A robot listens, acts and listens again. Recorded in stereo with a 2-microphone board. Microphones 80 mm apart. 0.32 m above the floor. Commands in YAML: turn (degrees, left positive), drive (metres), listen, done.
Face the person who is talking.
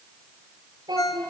turn: -65
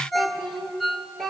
done: "Facing the child speaking, 2 to 4 m away."